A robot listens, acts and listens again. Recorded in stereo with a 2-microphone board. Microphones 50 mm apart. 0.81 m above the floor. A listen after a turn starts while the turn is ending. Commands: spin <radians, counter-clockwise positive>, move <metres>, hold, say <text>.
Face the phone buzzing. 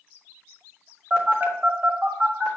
spin -0.52
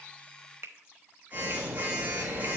spin -2.53
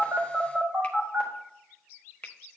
spin -0.26
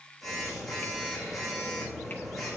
say Found it: a phone buzzing, straight ahead.